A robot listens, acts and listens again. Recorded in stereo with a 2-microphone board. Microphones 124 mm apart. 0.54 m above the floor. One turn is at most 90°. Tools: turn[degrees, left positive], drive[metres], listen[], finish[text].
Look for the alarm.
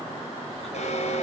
Thought: The alarm: about 65° left or 115° left.
Action: turn[65]
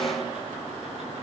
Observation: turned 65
Action: listen[]
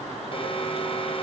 Thought: So it is at 45° left.
Action: turn[45]
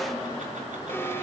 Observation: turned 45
Thought: The alarm is now 15° left.
Action: turn[15]
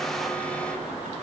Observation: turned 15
Action: listen[]
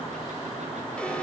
Action: listen[]
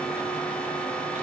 Thought: The alarm is now 10° left.
Action: turn[10]
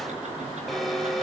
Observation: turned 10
Action: finish[Found it: an alarm, straight ahead.]